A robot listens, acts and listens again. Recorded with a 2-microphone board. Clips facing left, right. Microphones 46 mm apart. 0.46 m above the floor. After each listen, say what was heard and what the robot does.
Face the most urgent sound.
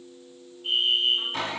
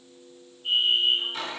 The fire alarm: about 50° left or 130° left. Turn 50° left.
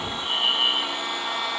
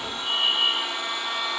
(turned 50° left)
So it is at 75° left. Turn 75° left.
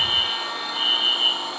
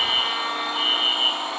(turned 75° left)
Found it: a fire alarm, straight ahead.